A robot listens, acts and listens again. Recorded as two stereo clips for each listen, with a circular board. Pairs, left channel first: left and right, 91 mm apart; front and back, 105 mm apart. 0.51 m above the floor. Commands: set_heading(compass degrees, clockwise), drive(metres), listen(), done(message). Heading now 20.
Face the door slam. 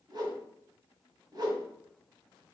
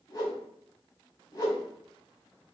listen()
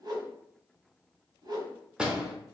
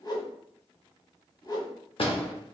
set_heading(30)
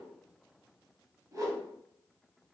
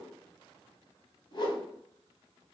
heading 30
done("I heard a door slam from this way, but can't make it out now.")